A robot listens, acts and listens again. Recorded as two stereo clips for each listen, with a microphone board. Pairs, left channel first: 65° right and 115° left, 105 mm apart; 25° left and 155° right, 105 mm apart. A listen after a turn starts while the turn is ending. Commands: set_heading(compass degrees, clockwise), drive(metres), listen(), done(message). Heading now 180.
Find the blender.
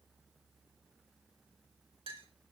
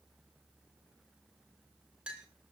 listen()
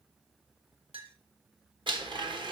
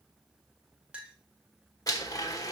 set_heading(105)
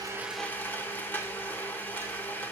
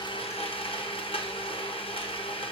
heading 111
done("Facing the blender, 1 to 2 m away.")